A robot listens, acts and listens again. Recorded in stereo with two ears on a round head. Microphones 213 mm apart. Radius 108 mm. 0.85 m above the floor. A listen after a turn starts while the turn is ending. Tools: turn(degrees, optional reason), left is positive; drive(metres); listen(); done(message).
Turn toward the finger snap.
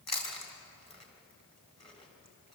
listen()
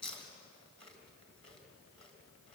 listen()
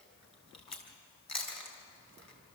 done("I can't make out a finger snap, only chewing.")